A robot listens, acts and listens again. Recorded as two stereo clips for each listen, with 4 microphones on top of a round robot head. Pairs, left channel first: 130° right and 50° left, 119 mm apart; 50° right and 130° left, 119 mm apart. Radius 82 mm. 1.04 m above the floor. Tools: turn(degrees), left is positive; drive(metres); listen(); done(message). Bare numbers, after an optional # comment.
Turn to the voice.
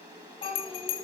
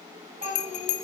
# The child speaking: 175° left.
turn(175)
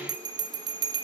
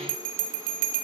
listen()
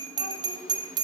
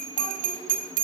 listen()
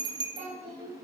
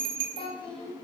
done("Found it: a child speaking, straight ahead, over 4 m away.")